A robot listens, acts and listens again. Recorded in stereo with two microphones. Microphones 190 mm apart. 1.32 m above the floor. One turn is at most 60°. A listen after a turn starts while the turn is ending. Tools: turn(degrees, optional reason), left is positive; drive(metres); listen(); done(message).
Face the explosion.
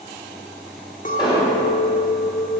turn(degrees=25, reason="The explosion: about 25° left or 155° left.")
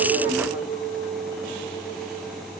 listen()
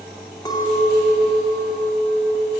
done("I heard an explosion, but can't make it out now. It was about straight ahead or 130° left.")